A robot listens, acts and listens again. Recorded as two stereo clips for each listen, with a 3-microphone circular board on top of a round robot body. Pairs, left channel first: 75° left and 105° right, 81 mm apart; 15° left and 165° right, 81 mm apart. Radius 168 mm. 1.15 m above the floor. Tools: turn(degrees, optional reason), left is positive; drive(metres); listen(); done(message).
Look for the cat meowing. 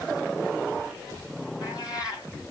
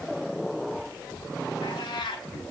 turn(degrees=35, reason="The cat meowing: 35° left.")
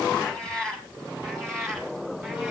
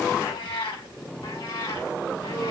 turn(degrees=-10, reason="The cat meowing is now 10° right.")
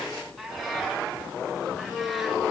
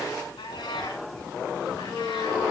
done("Found it: a cat meowing, straight ahead.")